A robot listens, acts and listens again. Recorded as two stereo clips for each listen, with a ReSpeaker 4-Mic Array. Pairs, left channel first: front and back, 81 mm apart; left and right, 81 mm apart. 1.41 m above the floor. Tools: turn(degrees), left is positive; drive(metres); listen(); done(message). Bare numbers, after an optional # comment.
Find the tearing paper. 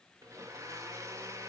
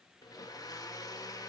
listen()
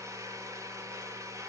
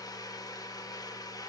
listen()
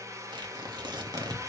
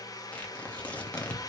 # The tearing paper: 165° left.
turn(165)
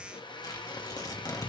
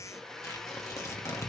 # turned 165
# The tearing paper is now 40° left.
turn(40)
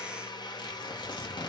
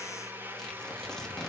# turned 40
# The tearing paper is now 10° left.
turn(10)
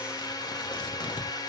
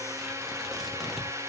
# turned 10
listen()
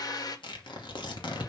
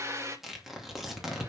done("Found it: tearing paper, straight ahead, 2 to 4 m away.")